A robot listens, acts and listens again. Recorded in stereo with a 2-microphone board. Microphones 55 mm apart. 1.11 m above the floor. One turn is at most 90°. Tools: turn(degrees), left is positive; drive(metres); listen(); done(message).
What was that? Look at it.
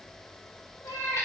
turn(degrees=70)
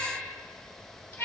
turn(degrees=60)
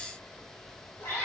turn(degrees=35)
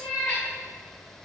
turn(degrees=20)
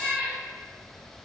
done("Found it: a cat meowing, straight ahead.")